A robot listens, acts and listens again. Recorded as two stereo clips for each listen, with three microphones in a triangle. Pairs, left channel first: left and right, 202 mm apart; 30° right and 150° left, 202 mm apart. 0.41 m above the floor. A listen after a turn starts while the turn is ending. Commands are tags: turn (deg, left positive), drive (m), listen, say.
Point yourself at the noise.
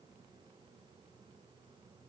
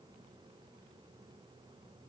<listen/>
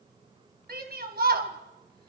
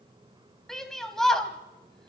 <turn deg="-115"/>
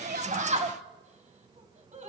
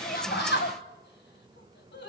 <turn deg="-40"/>
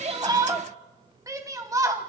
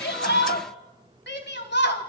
<turn deg="-20"/>
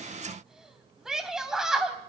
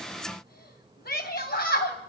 <say>Found it: a shout, straight ahead.</say>